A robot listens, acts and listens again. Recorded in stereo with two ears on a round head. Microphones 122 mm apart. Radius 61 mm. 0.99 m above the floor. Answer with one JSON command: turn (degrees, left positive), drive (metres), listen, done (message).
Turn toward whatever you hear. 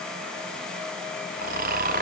{"turn": -70}
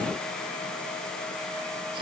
{"listen": true}
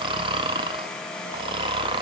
{"turn": -40}
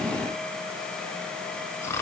{"turn": 20}
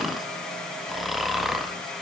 {"done": "Found it: snoring, straight ahead."}